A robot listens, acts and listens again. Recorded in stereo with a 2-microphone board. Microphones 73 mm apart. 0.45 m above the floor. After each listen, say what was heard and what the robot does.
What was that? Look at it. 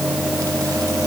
Keep listening.
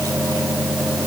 Keep listening.
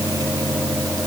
I can't make out anything to turn to.